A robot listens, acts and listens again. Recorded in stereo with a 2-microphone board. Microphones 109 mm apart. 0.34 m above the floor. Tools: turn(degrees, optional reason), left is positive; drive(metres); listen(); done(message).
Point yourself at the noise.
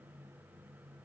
listen()
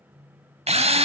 turn(degrees=-65, reason="The drill: about 65° right or 115° right.")
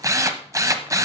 turn(degrees=-30, reason="So it is at 30° right.")
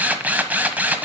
turn(degrees=-15, reason="The drill is now 15° right.")
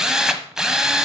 done("Facing the drill, 1 to 2 m away.")